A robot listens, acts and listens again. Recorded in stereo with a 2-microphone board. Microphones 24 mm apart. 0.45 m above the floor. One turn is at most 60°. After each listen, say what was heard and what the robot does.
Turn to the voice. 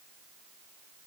Keep listening.
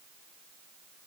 Keep listening.
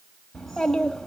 Turn 30° left.
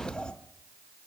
So it is at 140° left. Turn 60° left.
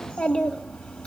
The child speaking is now 85° left. Turn 60° left.
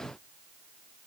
Nothing new. It was at 25° left. Turn 25° left.
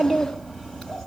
The child speaking is now 20° left. Turn 20° left.
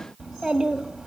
Facing the child speaking.